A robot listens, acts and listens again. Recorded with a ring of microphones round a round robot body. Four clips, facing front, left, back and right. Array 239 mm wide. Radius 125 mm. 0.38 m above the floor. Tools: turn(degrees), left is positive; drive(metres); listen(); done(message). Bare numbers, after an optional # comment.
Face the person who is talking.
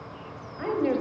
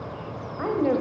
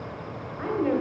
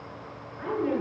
# The woman speaking: 70° left.
turn(70)
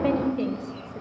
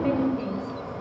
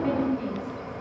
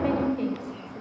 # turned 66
done("Found it: a woman speaking, straight ahead, 2 to 4 m away.")